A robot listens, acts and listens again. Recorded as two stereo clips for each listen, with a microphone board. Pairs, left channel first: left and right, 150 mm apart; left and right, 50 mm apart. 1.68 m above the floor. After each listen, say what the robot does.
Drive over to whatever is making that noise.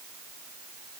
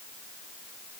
Keep listening.
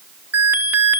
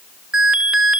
Turn 30° right.
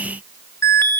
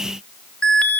Turn 15° left.
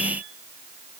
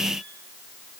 Keep listening.
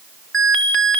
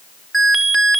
Drive 1.0 m forward.
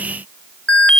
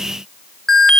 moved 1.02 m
Turn 10° left.
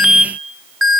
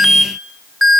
Drive 1.0 m forward.
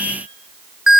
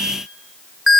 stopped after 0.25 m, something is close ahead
I am next to the alarm.